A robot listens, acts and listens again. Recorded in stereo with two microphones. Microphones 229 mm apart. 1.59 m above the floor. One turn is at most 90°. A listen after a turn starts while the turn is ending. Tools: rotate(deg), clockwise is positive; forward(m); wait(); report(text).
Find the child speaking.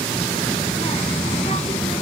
rotate(-30)
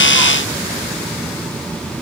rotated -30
report("Found it: a child speaking, straight ahead.")